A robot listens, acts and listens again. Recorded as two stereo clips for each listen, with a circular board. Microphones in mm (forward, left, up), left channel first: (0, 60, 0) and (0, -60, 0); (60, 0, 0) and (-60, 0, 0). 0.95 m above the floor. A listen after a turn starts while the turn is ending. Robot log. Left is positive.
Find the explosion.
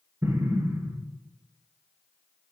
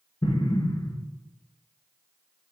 note: The explosion: 30° right.
cmd yaw -30
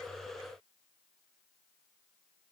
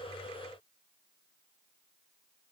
end: I heard an explosion from this way, but can't make it out now.